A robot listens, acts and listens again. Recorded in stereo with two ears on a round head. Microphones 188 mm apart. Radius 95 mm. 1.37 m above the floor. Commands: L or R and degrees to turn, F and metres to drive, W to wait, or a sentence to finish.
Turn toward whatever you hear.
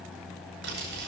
R65
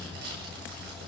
R50
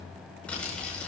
Found it: crumpling, straight ahead.